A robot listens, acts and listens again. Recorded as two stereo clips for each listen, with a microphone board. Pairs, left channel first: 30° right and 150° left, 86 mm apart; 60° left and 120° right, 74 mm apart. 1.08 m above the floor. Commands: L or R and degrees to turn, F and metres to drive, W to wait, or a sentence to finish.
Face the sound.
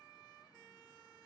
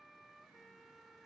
W
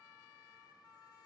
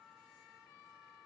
W
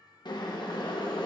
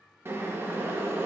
R65
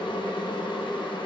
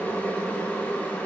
R10
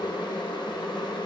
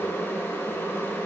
Facing the boiling, under 1 m away.